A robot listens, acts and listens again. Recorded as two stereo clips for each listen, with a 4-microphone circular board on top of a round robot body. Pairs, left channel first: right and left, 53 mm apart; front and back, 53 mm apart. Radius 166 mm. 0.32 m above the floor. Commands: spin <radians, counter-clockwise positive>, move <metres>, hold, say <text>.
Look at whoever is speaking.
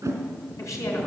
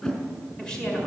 spin -1.22
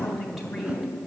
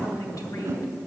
say Found it: a woman speaking, straight ahead.